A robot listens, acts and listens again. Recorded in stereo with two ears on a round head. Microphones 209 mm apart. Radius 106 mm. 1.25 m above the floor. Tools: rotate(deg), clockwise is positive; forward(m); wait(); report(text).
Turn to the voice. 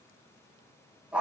wait()
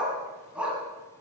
wait()
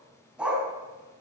report("I can't make out anyone speaking to turn to.")